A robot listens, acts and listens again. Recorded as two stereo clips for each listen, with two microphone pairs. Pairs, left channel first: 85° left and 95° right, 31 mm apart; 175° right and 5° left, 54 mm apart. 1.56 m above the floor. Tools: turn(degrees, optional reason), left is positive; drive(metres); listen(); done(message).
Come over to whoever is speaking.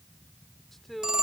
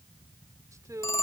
drive(metres=1.0)
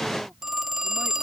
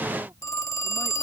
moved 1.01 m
listen()
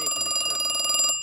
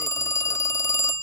listen()
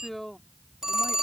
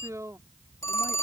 drive(metres=1.0)
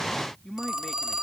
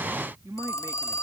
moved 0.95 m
drive(metres=1.0)
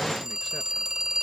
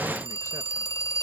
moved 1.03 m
listen()
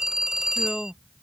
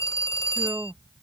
drive(metres=1.0)
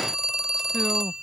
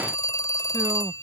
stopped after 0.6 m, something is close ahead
listen()
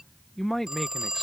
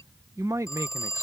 done("I am next to the man speaking.")